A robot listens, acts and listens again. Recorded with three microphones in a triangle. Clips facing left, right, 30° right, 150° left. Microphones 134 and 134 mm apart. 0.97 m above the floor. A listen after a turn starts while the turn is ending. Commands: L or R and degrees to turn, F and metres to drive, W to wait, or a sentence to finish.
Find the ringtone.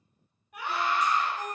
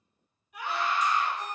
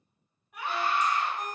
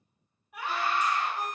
L100
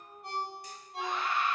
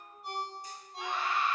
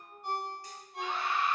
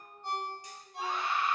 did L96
Facing the ringtone, 1 to 2 m away.